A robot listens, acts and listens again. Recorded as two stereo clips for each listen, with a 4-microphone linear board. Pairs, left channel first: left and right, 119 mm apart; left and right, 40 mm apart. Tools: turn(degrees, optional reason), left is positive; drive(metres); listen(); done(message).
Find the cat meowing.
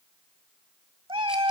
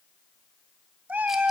turn(degrees=-45, reason="The cat meowing: about 45° right or 135° right.")
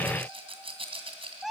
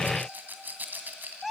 done("Found it: a cat meowing, straight ahead, 1 to 2 m away.")